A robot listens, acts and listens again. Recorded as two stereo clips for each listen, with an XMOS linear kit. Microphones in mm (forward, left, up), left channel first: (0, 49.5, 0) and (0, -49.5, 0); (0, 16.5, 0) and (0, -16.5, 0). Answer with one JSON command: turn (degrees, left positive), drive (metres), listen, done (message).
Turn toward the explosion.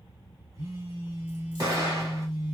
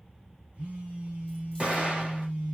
{"turn": -35}
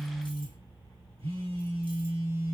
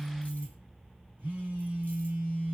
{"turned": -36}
{"listen": true}
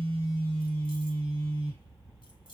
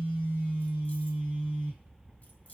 {"done": "I heard an explosion, but can't make it out now. It was about straight ahead or 105° right."}